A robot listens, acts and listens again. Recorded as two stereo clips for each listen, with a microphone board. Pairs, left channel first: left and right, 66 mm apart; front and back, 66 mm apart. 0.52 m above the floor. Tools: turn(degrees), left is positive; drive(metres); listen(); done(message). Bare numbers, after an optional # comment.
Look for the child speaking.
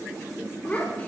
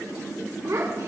# The child speaking: 155° left.
turn(155)
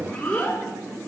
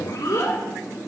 # The child speaking is now 30° left.
turn(30)
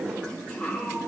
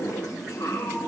# The child speaking is now 20° left.
turn(20)
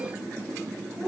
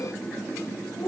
done("Facing the child speaking.")